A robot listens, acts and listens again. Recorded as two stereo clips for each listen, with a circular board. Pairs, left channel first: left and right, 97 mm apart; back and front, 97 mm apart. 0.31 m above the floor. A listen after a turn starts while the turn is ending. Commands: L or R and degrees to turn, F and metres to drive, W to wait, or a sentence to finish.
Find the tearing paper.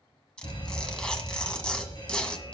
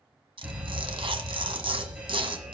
L10
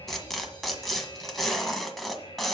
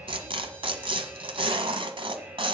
Facing the tearing paper.